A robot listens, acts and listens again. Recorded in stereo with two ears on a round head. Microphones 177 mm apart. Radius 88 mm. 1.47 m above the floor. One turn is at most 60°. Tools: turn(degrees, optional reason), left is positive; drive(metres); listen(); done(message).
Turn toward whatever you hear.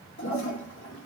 turn(degrees=60)
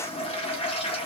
turn(degrees=30, reason="So it is at 30° left.")
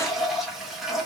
done("Found it: a toilet flushing, straight ahead, 1 to 2 m away.")